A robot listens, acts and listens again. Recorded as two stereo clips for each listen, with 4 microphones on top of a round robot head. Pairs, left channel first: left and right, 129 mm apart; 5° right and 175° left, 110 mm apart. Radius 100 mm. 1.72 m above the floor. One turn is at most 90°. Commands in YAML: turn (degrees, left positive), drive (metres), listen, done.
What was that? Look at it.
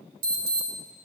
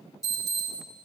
turn: -75
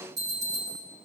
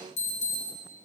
turn: -20
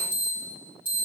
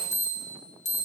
turn: -10
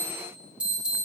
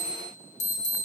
done: "Facing the alarm."